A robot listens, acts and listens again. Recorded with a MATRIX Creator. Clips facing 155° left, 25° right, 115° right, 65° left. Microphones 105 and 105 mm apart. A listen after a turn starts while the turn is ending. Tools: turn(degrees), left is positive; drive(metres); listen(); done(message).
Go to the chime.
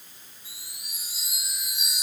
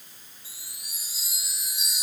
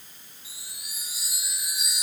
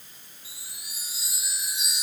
turn(degrees=130)
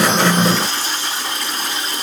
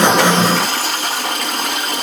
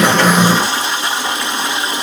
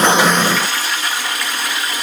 listen()
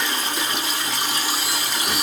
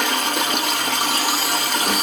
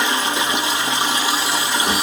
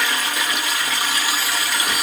listen()
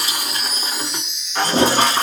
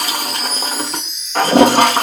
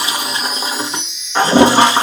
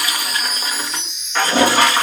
turn(degrees=20)
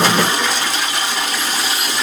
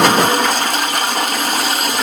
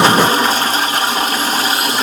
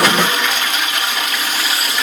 listen()
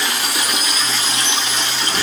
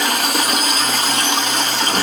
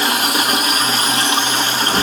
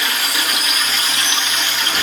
listen()
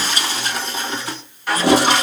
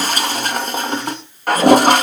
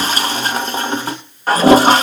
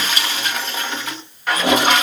done("I heard a chime from this way, but can't make it out now. I did not reach it.")